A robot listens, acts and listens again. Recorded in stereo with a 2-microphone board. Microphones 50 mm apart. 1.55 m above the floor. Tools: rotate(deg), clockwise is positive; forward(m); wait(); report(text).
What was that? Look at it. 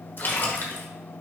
rotate(-45)
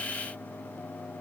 wait()
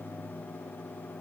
report("I heard a splash, but can't make it out now. It was about straight ahead or 90° left.")